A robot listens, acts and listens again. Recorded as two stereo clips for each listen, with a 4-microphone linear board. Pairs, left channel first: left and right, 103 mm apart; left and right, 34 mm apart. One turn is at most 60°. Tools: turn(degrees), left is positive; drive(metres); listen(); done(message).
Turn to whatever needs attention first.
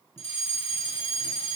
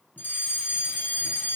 turn(degrees=60)
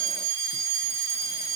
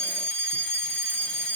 turn(degrees=35)
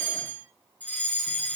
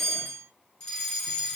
turn(degrees=15)
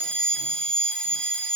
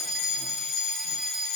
done("Facing the fire alarm.")